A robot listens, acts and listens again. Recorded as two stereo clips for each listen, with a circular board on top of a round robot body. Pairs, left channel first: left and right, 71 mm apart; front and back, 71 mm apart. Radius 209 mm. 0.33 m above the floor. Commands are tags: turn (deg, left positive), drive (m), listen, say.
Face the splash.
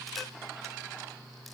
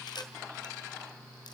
<listen/>
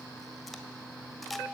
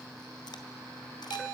<listen/>
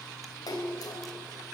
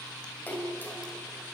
<turn deg="60"/>
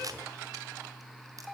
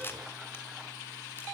<say>I heard a splash from this way, but can't make it out now.</say>